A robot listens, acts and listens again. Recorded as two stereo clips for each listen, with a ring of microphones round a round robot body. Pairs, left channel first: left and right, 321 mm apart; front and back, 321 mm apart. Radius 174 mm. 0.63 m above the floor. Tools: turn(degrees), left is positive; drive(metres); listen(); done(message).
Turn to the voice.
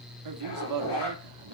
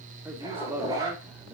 turn(degrees=-95)
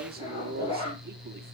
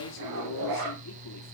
turn(degrees=-35)
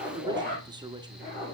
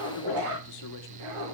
listen()
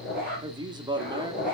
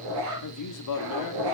turn(degrees=-15)
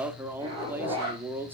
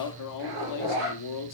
done("Facing the man speaking.")